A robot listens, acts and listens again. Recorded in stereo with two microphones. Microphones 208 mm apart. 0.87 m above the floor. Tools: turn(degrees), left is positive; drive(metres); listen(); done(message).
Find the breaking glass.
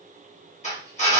listen()
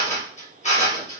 listen()
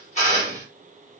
done("I can't make out breaking glass, only a drill.")